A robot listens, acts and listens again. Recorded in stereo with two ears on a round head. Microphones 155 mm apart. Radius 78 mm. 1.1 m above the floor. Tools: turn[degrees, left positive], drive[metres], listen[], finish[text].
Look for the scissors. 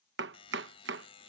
Action: listen[]
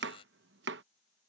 Action: listen[]
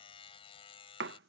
Action: finish[I can't make out scissors to turn to.]